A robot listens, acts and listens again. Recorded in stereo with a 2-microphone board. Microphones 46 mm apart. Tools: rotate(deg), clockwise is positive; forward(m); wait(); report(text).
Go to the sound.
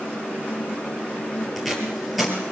rotate(-30)
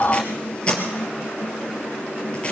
rotate(-155)
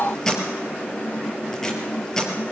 rotate(-10)
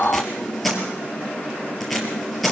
forward(1.0)
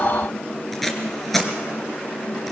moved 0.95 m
forward(1.0)
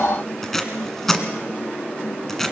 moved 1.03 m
forward(1.0)
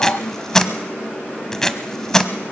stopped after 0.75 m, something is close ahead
rotate(-10)
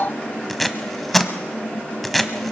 report("Arrived at the tape being pulled, straight ahead.")